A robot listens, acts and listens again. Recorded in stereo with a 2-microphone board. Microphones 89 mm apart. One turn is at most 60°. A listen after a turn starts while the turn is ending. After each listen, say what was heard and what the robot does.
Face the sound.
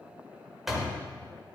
Turn 30° left.
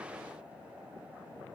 Keep listening.
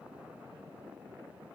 I heard a door slam, but can't make it out now. It was about 30° right or 150° left.